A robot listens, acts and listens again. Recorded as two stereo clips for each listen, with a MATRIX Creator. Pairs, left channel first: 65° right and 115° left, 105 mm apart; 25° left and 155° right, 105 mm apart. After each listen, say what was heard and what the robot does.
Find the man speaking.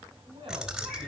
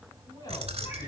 The man speaking: 70° left. Turn 70° left.
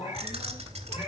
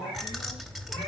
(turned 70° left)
Keep listening.
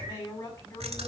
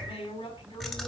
The man speaking is now 15° right. Turn 15° right.
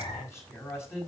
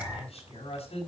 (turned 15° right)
Facing the man speaking.